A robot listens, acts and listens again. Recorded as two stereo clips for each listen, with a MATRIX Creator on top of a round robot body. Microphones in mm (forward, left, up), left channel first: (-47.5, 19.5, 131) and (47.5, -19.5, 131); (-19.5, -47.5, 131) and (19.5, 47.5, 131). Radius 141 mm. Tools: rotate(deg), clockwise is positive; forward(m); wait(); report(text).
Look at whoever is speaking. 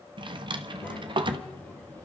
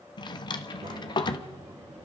rotate(-85)
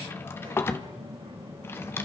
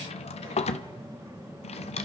report("Facing the child speaking, 2 to 4 m away.")